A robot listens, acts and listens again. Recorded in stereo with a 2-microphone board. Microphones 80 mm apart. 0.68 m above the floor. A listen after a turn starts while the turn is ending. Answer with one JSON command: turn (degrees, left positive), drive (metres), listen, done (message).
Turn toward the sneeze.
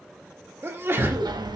{"turn": -30}
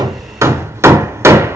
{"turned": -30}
{"listen": true}
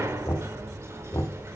{"done": "I heard a sneeze, but can't make it out now. It was about straight ahead or 120° right."}